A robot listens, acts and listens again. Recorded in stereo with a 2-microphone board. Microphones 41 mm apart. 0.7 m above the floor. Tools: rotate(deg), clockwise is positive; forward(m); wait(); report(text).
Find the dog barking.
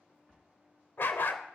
rotate(-55)
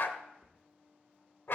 rotate(-65)
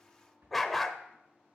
report("Facing the dog barking.")